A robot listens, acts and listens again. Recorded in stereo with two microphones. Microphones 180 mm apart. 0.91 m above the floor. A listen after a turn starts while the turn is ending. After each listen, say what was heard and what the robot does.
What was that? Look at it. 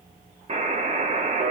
The buzzer: about 40° right or 140° right. Turn 40° right.
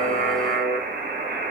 So it is at 95° right. Turn 95° right.
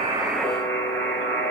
The buzzer is now 15° left. Turn 15° left.
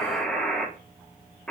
Facing the buzzer.